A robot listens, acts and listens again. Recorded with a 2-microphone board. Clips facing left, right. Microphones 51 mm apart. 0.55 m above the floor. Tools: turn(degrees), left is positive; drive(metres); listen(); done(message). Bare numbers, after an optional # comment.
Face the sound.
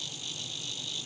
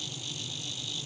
listen()
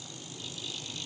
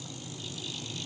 listen()
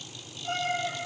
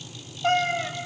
# The cat meowing: about 55° right or 125° right.
turn(-55)
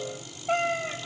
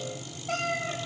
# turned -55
# So it is at 25° left.
turn(25)
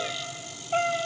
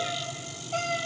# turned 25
# The cat meowing is now 35° left.
turn(35)
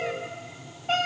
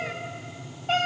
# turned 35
done("Facing the cat meowing.")